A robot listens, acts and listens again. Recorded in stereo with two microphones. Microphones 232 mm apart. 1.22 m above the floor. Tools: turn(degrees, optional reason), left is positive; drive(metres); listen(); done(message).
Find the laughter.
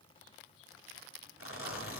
listen()
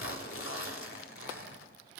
listen()
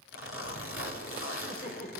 turn(degrees=35, reason="The laughter: about 35° left or 145° left.")
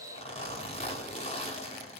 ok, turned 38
listen()
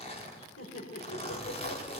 turn(degrees=105, reason="So it is at 105° left.")
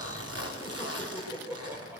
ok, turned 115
turn(degrees=-10, reason="The laughter is now 10° right.")
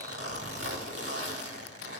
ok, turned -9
listen()
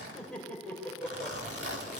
done("Facing the laughter.")